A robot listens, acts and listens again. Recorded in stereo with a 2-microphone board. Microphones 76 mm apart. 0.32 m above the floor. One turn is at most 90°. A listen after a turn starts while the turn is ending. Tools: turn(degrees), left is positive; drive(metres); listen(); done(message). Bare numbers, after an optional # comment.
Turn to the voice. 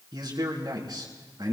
# The man speaking: about 75° right or 105° right.
turn(-75)
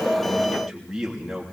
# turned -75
done("Found it: a man speaking, straight ahead, 2 to 4 m away.")